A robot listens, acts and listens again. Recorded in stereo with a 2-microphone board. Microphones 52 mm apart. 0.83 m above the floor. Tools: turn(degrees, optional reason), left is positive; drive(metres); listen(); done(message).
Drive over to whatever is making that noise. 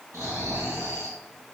turn(degrees=-90)
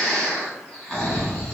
drive(metres=1.0)
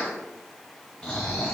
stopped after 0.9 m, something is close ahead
done("Arrived at the snoring, straight ahead.")